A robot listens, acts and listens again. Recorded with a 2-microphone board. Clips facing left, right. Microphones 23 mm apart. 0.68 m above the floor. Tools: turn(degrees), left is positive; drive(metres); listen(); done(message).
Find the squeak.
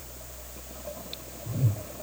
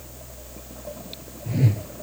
listen()
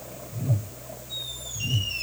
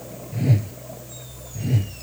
listen()
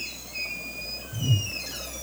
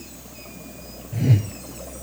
turn(degrees=55)
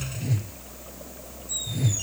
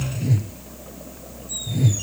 listen()
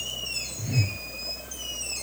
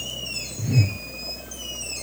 done("Facing the squeak.")